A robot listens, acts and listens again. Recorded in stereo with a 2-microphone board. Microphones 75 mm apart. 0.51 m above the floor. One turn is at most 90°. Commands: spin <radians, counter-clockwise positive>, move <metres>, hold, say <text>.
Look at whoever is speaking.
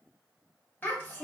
spin 0.44
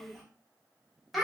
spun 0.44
say Found it: a child speaking, straight ahead.